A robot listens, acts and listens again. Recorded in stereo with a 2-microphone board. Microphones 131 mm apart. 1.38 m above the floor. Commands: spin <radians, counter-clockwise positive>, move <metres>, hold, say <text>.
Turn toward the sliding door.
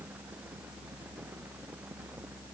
hold
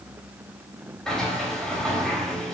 spin 0.52
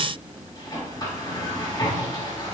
spin 2.53
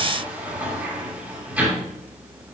spin -0.17
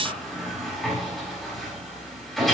say Found it: a sliding door, straight ahead.